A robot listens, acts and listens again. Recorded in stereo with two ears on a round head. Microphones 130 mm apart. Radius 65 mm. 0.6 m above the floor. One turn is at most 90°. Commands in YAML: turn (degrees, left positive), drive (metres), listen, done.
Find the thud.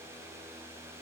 listen: true
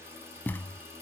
turn: 30
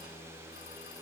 listen: true
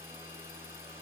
done: "I heard a thud, but can't make it out now. It was about 15° right or 135° left."